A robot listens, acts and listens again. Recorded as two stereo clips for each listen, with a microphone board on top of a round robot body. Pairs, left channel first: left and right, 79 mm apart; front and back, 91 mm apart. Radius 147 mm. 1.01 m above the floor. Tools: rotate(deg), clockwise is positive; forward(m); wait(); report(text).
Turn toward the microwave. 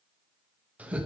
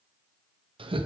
wait()
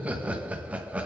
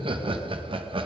wait()
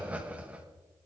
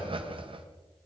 report("I can't make out a microwave, only laughter.")